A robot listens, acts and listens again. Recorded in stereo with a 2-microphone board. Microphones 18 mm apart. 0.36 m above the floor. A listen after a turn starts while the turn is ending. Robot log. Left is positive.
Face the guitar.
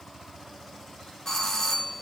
cmd idle
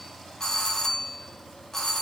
cmd idle
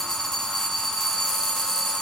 end: I can't make out a guitar, only a doorbell.